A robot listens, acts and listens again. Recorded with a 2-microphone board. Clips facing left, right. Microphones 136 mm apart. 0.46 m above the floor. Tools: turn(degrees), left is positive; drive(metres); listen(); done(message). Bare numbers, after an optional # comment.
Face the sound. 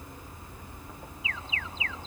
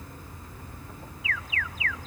# The alarm: about 25° left or 155° left.
turn(25)
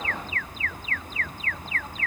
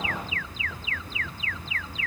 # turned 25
# So it is at 130° left.
turn(130)
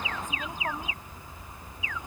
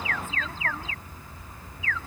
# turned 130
# The alarm is now 20° left.
turn(20)
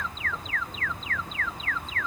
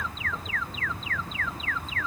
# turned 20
done("Found it: an alarm, straight ahead.")